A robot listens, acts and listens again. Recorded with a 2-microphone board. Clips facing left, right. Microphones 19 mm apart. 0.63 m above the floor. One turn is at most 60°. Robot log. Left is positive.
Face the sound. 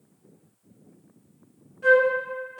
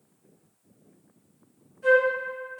note: The flute: about 40° left or 140° left.
cmd yaw +40
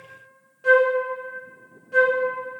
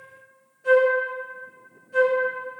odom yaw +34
note: So it is at 100° left.
cmd yaw +60
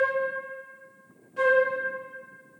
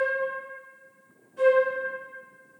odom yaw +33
note: The flute is now 65° left.
cmd yaw +60
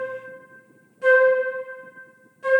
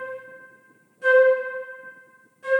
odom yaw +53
note: The flute is now 10° left.
cmd yaw +10
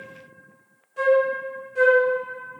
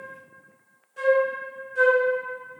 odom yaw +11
end: Facing the flute.